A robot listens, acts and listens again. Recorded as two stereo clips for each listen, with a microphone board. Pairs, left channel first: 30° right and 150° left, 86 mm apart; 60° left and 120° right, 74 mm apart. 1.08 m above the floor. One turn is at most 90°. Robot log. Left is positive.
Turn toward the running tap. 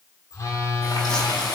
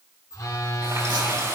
note: The running tap: 65° right.
cmd yaw -65
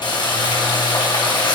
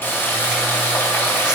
end: Found it: a running tap, straight ahead, over 4 m away.